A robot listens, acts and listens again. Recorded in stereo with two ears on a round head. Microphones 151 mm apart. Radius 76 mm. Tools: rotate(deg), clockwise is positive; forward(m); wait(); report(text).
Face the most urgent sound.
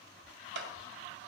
wait()
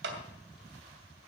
wait()
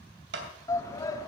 rotate(-20)
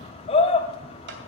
rotate(-140)
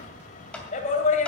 rotate(-45)
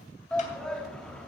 report("Found it: a shout, straight ahead, 2 to 4 m away.")